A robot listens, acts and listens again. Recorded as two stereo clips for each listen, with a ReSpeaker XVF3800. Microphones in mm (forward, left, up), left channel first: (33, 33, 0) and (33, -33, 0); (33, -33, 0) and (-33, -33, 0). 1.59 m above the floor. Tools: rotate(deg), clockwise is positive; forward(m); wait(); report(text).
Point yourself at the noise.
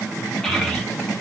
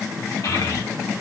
rotate(-10)
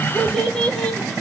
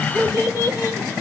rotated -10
rotate(-15)
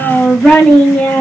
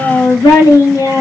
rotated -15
rotate(-15)
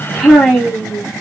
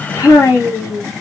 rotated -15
rotate(-10)
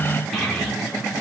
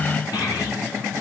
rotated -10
wait()
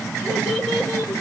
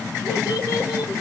rotate(-15)
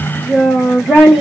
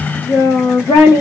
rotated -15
report("Found it: a child speaking, straight ahead.")